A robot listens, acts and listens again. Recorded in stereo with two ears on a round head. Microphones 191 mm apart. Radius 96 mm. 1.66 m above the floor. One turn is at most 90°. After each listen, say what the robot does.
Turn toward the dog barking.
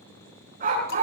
Turn 40° right.
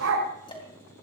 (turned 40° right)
Turn 90° right.
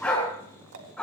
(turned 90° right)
Facing the dog barking, over 4 m away.